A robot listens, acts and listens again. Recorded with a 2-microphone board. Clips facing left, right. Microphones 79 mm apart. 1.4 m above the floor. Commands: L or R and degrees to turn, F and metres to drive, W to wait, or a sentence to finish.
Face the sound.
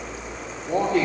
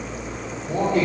L65
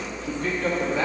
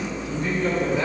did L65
L70
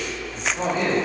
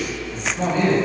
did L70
L15
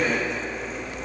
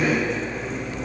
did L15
Found it: a man speaking, straight ahead, 2 to 4 m away.